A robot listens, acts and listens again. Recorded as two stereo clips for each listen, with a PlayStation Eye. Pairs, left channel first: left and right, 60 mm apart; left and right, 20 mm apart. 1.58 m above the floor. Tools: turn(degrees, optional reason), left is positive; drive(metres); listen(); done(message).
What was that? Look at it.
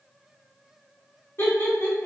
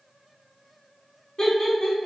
turn(degrees=30, reason="The laughter: about 30° left or 150° left.")
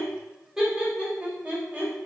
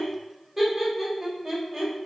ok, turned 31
turn(degrees=-25, reason="So it is at 25° right.")
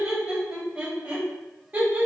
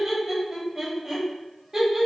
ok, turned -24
turn(degrees=-30, reason="The laughter is now 30° right.")
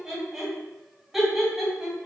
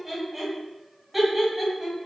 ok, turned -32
done("Facing the laughter.")